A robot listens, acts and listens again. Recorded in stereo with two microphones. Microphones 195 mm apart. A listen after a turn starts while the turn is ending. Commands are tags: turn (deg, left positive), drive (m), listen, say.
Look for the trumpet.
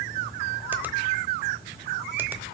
<listen/>
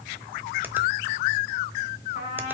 <turn deg="35"/>
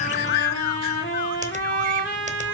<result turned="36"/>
<turn deg="110"/>
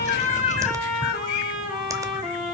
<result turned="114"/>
<say>Found it: a trumpet, straight ahead.</say>